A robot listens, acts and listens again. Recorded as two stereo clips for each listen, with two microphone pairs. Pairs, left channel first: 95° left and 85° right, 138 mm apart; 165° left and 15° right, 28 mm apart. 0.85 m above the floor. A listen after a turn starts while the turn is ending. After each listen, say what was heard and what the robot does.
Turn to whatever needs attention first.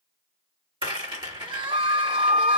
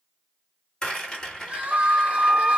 The crying: 35° right. Turn 35° right.
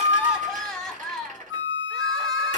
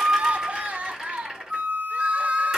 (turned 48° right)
The crying is now 10° left. Turn 10° left.
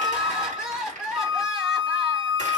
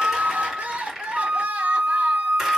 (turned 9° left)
Facing the crying.